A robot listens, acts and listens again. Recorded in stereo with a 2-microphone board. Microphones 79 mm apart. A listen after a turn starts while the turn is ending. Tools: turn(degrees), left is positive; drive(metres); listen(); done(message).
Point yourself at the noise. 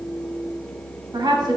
turn(degrees=-60)
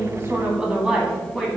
done("Facing the woman speaking, 2 to 4 m away.")